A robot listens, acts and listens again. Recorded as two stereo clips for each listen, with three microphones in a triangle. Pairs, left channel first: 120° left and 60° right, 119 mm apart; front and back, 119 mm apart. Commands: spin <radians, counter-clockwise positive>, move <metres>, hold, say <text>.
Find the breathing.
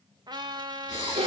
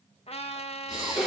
spin 1.05
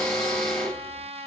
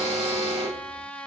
hold
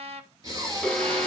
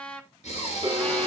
say Found it: breathing, straight ahead.